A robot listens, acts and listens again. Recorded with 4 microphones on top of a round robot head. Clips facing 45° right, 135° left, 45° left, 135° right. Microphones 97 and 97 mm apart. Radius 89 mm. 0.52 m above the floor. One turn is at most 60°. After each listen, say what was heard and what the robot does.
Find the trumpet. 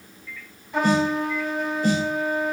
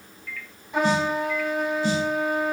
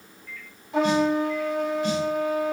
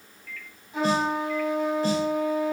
The trumpet: 55° left. Turn 55° left.
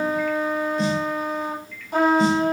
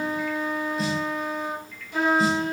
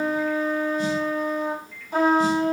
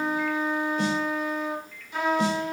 Facing the trumpet, over 4 m away.